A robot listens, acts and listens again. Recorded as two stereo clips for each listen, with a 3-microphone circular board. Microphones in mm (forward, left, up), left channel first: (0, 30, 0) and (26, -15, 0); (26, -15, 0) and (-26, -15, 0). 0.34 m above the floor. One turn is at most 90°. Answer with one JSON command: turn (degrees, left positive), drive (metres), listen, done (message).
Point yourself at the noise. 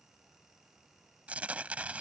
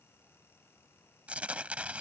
{"turn": -90}
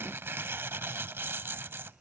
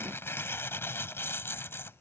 {"turn": -30}
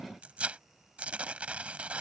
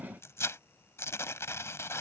{"done": "Facing the tearing paper."}